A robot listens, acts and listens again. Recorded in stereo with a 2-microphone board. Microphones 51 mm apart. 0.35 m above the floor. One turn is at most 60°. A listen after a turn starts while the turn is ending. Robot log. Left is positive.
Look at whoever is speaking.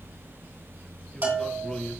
note: The man speaking: about 15° left or 165° left.
cmd yaw +15
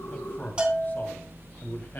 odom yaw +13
note: The man speaking: about 45° left or 135° left.
cmd yaw +45
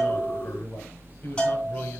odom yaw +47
note: So it is at 45° left.
cmd yaw +45
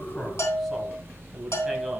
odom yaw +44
end: Facing the man speaking, 2 to 4 m away.